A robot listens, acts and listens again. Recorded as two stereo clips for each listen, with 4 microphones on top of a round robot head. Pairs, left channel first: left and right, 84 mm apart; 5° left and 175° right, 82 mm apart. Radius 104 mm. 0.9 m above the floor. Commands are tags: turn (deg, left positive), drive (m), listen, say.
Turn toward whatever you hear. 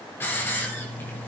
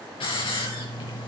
<turn deg="25"/>
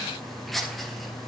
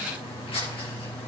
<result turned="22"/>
<say>Facing the hiss, over 4 m away.</say>